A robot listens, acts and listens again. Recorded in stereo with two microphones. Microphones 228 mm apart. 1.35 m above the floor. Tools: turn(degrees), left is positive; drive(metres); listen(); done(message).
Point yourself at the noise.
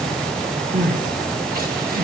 turn(degrees=-40)
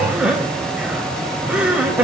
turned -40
done("Found it: crying, straight ahead, 2 to 4 m away.")